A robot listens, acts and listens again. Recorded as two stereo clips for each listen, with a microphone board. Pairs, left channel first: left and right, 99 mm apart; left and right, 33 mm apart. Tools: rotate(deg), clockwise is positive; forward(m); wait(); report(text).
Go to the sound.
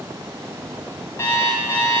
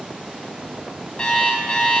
rotate(-30)
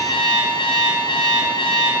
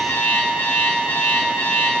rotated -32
rotate(-120)
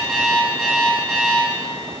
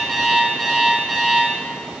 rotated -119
forward(1.0)
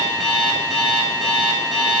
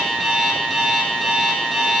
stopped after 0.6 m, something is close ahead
report("Something is in my way. I am facing the alarm clock but have not reached it.")